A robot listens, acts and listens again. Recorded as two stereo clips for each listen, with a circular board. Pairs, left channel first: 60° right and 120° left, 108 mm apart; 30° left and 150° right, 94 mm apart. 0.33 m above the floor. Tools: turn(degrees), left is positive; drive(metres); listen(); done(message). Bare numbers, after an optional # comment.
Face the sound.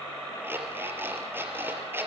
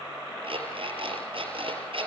# The alarm clock: 170° right.
turn(-170)
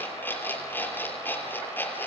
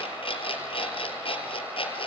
# The alarm clock is now 10° left.
turn(10)
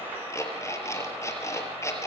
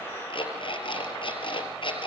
done("Facing the alarm clock.")